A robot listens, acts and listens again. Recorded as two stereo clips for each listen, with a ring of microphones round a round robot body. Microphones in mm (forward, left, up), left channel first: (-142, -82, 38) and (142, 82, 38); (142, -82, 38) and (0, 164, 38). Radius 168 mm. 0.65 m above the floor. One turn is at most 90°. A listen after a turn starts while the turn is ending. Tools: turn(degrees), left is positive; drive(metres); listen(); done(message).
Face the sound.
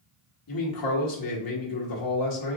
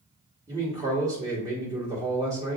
turn(degrees=-90)
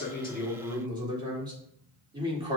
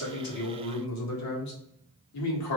turn(degrees=-45)
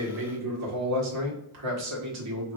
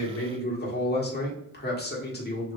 done("Facing the man speaking, 1 to 2 m away.")